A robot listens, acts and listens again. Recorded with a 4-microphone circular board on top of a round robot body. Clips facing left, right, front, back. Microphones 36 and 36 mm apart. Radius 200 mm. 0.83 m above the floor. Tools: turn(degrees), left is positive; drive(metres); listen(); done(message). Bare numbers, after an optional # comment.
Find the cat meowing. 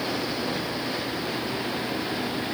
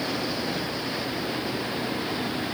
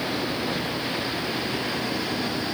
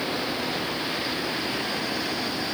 listen()
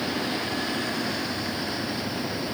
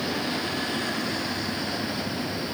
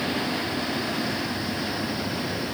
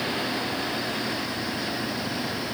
listen()
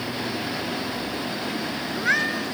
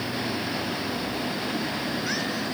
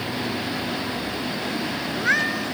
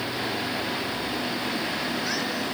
# The cat meowing: 40° left.
turn(40)
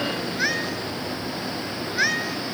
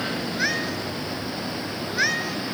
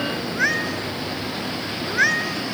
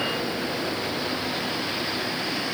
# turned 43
done("Found it: a cat meowing, straight ahead.")